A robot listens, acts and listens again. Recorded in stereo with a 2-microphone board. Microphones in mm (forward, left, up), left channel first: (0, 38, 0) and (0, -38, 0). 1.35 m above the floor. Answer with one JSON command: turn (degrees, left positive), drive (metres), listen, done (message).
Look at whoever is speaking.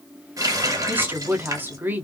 {"turn": -25}
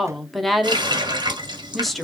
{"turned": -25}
{"done": "Found it: a woman speaking, straight ahead, under 1 m away."}